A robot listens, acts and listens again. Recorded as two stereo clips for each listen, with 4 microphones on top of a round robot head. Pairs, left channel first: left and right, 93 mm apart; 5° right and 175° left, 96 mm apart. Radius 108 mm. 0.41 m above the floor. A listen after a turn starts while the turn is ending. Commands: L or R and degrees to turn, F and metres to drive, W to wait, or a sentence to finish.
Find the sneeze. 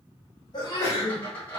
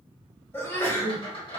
L55
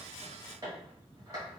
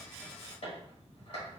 Facing where the sneeze came from. I can't hear it now.